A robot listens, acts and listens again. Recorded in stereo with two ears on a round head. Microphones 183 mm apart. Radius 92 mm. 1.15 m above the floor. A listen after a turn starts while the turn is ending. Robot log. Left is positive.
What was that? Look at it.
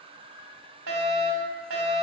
note: The fire alarm: about 75° right or 105° right.
cmd yaw -75
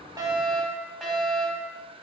end: Found it: a fire alarm, straight ahead.